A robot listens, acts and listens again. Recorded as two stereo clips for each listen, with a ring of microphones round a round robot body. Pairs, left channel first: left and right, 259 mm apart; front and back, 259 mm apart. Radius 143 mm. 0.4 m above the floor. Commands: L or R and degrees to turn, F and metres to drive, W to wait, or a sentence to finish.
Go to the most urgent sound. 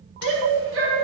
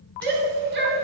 R130
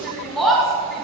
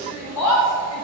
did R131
F1.0
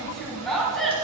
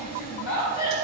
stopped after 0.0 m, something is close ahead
Something is in my way. I am facing the shout but have not reached it.